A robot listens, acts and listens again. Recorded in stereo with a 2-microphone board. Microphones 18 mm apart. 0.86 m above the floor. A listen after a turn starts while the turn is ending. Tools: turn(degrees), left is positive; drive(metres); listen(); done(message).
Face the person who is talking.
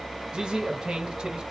turn(degrees=-60)
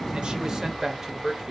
turn(degrees=-40)
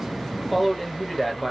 done("Facing the man speaking, 1 to 2 m away.")